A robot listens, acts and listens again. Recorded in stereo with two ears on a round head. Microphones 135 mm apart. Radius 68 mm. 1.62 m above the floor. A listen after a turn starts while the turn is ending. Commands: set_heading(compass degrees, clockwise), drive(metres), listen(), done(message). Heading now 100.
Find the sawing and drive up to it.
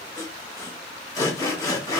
set_heading(75)
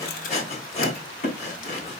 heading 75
set_heading(310)
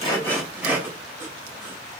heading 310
set_heading(325)
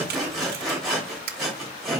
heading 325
drive(1.0)
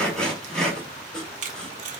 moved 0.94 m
drive(1.0)
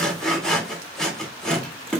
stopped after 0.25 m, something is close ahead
done("I am next to the sawing.")